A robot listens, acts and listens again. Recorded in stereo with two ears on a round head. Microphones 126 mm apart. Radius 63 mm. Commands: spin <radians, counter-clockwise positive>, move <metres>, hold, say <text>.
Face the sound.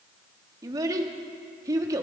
spin -0.44
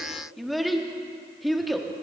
say Facing the child speaking.